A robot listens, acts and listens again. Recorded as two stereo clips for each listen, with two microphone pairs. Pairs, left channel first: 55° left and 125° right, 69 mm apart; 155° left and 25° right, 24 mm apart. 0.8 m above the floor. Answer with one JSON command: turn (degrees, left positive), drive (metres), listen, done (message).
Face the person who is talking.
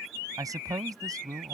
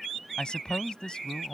{"turn": -155}
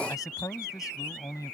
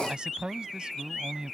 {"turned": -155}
{"turn": 25}
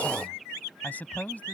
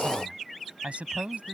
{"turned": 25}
{"turn": -15}
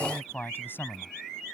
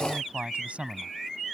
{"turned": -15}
{"done": "Facing the man speaking."}